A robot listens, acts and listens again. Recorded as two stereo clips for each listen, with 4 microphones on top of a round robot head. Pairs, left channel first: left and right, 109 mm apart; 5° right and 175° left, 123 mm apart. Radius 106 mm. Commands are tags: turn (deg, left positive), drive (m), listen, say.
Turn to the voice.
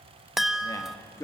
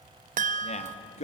<turn deg="25"/>
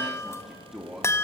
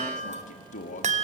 <say>Found it: a man speaking, straight ahead, 2 to 4 m away.</say>